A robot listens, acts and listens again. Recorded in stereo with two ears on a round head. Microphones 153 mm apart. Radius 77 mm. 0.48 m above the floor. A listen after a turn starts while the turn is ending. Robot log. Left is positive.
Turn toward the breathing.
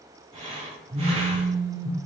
note: The breathing: about 30° right or 150° right.
cmd yaw -30
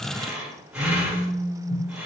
end: Found it: breathing, straight ahead.